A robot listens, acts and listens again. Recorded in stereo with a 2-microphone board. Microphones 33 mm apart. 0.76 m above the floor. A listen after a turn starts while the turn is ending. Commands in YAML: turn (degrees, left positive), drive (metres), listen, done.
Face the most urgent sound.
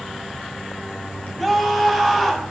turn: 30
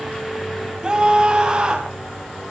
turn: -20
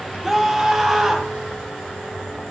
done: "Found it: a scream, straight ahead."